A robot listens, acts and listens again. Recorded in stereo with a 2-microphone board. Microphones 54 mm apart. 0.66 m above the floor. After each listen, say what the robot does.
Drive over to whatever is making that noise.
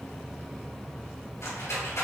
Turn 60° left.
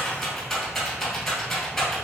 Drive 1.0 m forward.
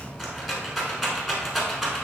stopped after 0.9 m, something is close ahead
Arrived at the rattle, straight ahead.